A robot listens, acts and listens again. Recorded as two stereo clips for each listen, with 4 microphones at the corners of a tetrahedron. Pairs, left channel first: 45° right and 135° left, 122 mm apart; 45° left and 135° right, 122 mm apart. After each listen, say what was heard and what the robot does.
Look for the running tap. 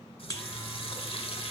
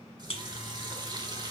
The running tap: 80° right. Turn 80° right.
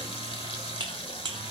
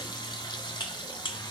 Found it: a running tap, straight ahead, 1 to 2 m away.